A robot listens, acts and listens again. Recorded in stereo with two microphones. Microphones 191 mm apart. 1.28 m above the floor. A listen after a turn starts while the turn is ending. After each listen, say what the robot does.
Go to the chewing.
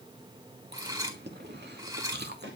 Turn 60° right.
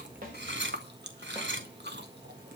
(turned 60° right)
Turn 60° right.
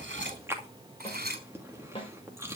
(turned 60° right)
Turn 15° right.
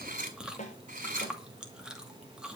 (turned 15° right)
Drive 1.0 m forward.
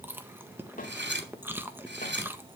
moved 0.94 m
Turn 10° right.
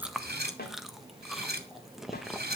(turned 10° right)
Drive 1.0 m forward.
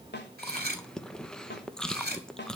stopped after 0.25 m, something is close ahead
I am next to the chewing.